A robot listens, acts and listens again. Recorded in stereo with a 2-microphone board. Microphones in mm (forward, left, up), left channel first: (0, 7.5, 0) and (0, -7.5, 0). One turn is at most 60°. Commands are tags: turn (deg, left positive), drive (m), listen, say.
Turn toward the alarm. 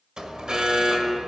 <turn deg="-60"/>
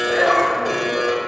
<turn deg="-15"/>
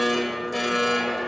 <say>Found it: an alarm, straight ahead.</say>